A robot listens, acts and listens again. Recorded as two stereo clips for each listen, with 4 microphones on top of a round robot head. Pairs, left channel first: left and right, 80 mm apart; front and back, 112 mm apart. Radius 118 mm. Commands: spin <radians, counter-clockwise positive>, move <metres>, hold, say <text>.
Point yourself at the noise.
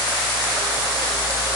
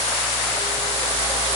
hold
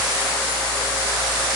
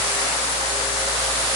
hold
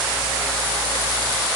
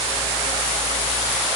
say I can't make out anything to turn to.